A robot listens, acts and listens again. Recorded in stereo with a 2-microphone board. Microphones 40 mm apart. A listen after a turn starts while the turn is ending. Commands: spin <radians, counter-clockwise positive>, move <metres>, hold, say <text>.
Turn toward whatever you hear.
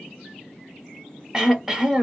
spin -0.52
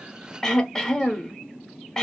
spin 0.26
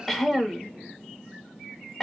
say Found it: throat clearing, straight ahead, under 1 m away.